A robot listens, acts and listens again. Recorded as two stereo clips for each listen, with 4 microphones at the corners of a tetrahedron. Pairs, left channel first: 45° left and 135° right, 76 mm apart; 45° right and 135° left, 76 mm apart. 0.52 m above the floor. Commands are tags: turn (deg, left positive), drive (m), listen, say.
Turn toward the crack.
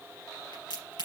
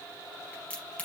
<turn deg="30"/>
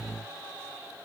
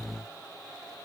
<say>I heard a crack from this way, but can't make it out now.</say>